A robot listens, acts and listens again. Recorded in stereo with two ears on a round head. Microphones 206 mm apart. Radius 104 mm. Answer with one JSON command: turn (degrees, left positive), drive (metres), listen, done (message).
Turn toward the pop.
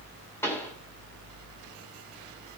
{"turn": 30}
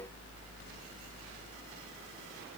{"listen": true}
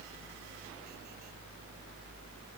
{"done": "I heard a pop, but can't make it out now. It was about 20° right or 140° left."}